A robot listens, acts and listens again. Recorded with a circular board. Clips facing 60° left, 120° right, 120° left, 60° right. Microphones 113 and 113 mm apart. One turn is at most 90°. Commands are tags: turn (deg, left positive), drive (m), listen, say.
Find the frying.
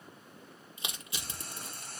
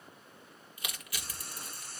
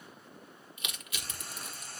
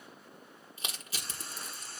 <turn deg="70"/>
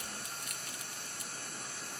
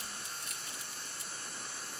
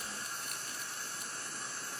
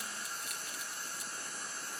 <turn deg="15"/>
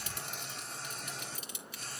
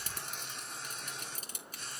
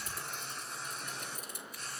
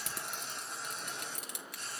<say>Facing the frying.</say>